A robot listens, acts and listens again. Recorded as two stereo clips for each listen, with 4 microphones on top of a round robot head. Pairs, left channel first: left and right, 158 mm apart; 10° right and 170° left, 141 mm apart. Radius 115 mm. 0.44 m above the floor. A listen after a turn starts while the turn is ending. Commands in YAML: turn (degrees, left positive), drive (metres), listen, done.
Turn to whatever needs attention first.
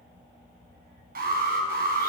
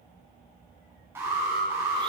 turn: -110
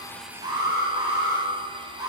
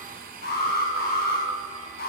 turn: -15
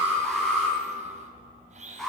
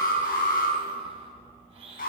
done: "Facing the alarm, over 4 m away."